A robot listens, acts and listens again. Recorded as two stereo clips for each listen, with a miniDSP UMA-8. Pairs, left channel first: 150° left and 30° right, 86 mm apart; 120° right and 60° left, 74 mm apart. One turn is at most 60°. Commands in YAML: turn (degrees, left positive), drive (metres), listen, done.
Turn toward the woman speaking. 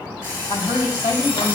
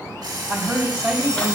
turn: 60
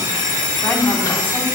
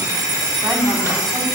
turn: 60
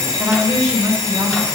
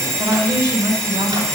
turn: 25
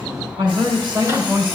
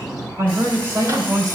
turn: 10
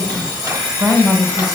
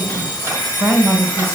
done: "Found it: a woman speaking, straight ahead, 2 to 4 m away."